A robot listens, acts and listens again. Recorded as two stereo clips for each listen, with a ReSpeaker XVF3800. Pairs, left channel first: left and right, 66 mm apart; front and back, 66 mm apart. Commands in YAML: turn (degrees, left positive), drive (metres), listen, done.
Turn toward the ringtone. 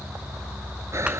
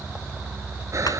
listen: true
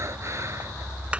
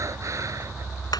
listen: true
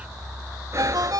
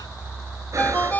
turn: -65
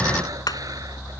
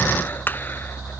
listen: true
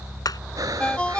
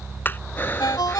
turn: 15
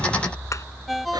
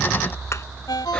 done: "Found it: a ringtone, straight ahead."